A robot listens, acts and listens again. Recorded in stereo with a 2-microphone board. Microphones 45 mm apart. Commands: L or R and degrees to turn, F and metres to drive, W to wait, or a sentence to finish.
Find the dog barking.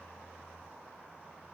W
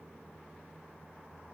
W
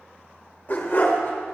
L45
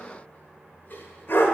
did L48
L50
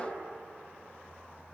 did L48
W
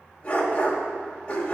L25
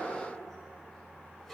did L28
W
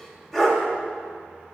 Found it: a dog barking, straight ahead.